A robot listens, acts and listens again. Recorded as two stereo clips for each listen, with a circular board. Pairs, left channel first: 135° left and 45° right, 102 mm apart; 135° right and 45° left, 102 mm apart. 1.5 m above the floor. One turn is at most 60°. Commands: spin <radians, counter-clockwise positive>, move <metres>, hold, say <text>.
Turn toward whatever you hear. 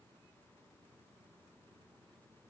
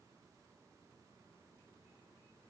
hold
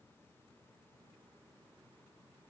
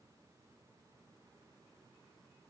hold
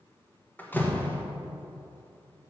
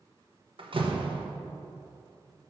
spin 1.05
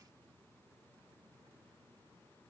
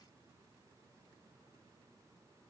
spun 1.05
say I heard a door slam from this way, but can't make it out now.